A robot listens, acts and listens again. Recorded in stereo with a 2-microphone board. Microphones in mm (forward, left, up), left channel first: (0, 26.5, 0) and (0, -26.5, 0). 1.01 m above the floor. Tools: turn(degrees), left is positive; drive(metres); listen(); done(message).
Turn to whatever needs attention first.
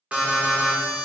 turn(degrees=-25)
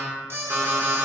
turn(degrees=-125)
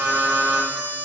turn(degrees=-35)
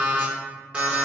turn(degrees=-20)
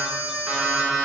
turn(degrees=-10)
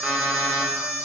done("Facing the alarm, under 1 m away.")